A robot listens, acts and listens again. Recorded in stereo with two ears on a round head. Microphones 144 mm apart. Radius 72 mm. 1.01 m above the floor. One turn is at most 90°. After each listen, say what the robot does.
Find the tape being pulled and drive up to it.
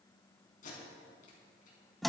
Turn 55° left.
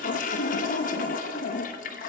Keep listening.
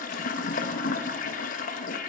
Keep listening.
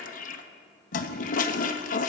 I heard tape being pulled, but can't make it out now. It was about straight ahead or 70° left. I did not reach it.